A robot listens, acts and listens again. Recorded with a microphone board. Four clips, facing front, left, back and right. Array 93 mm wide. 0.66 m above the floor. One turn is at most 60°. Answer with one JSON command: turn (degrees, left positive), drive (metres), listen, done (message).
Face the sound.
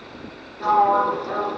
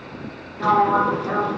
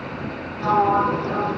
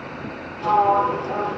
{"turn": 60}
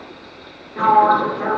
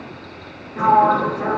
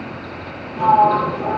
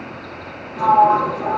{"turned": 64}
{"turn": 30}
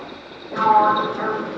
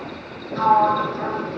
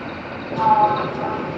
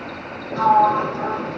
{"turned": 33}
{"done": "Found it: a sliding door, straight ahead."}